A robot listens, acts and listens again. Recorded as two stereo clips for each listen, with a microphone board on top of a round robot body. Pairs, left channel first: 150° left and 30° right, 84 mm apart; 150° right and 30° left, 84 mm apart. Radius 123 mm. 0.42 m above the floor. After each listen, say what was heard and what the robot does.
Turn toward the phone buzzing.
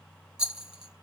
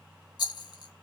Keep listening.
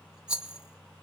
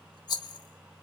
Keep listening.
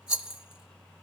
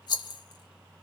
I can't make out a phone buzzing to turn to.